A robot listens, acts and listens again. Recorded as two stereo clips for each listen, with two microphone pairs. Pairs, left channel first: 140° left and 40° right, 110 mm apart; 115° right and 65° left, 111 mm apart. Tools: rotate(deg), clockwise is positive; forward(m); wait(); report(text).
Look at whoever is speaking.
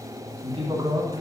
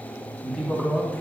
rotate(35)
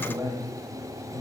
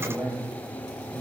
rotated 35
rotate(10)
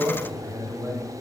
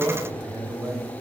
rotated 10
report("Found it: a man speaking, straight ahead, 2 to 4 m away.")